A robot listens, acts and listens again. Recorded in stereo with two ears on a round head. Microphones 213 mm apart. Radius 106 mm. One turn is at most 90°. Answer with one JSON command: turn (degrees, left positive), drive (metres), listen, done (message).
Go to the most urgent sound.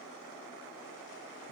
{"listen": true}
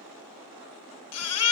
{"turn": 70}
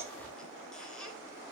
{"listen": true}
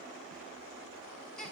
{"drive": 1.0}
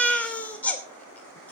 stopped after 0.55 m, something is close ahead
{"done": "Something is in my way. I am facing the baby crying but have not reached it."}